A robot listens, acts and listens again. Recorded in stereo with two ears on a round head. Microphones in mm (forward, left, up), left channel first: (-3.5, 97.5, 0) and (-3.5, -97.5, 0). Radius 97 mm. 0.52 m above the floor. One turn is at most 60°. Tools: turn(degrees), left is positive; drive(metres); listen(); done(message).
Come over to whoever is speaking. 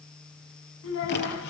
turn(degrees=60)
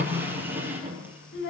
turn(degrees=50)
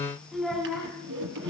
drive(metres=1.0)
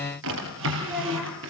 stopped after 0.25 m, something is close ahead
done("Something is in my way. I am facing the child speaking but have not reached it.")